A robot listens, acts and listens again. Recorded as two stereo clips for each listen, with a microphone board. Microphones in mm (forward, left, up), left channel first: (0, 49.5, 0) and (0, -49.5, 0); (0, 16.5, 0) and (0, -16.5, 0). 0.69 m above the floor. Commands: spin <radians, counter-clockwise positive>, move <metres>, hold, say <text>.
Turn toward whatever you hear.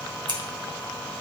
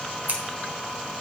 spin -0.87
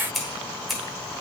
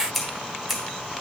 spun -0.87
say Found it: scissors, straight ahead.